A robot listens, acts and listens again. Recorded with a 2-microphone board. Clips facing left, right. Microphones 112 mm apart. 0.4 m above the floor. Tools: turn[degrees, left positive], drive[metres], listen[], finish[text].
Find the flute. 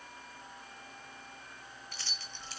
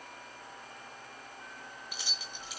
Action: listen[]
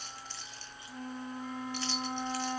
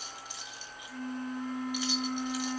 Thought: The flute: about 20° left or 160° left.
Action: turn[20]
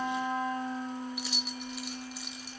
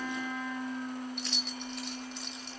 Thought: So it is at 130° left.
Action: turn[130]
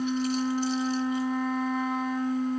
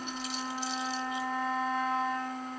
Thought: The flute is now 10° left.
Action: turn[10]
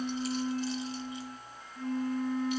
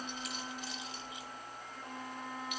Action: finish[Found it: a flute, straight ahead.]